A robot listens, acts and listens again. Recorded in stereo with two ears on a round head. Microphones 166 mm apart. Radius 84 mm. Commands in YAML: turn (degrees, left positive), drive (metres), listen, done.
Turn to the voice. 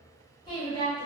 turn: 25
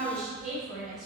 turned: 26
done: "Facing the woman speaking."